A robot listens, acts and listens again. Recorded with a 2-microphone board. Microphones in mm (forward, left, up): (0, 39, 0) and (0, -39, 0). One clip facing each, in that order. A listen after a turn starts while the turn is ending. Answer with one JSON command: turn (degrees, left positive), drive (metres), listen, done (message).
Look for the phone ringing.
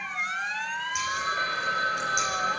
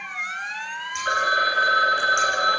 {"turn": -90}
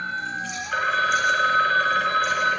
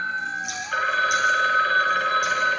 {"done": "Facing the phone ringing, 2 to 4 m away."}